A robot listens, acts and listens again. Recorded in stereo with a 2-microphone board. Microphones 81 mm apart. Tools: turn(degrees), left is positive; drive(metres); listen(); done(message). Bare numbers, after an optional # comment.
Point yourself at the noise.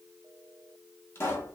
# The pop: about 35° left or 145° left.
turn(35)
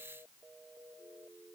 listen()
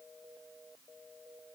done("I heard a pop, but can't make it out now. It was about straight ahead or 110° left.")